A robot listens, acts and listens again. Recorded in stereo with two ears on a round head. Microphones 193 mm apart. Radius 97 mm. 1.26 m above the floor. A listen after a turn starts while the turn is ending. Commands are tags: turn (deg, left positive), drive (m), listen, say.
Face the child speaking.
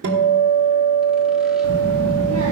<turn deg="-70"/>
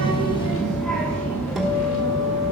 <turn deg="20"/>
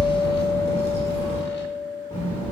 <turn deg="20"/>
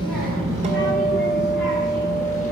<say>Facing the child speaking, 2 to 4 m away.</say>